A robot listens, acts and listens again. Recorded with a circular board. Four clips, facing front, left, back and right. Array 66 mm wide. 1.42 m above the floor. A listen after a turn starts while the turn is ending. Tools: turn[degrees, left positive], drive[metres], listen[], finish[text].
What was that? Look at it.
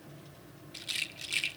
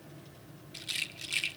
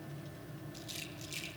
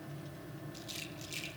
Thought: The rattle: 40° left.
Action: turn[40]
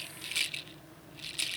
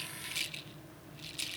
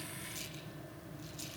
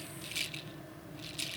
Action: finish[Facing the rattle.]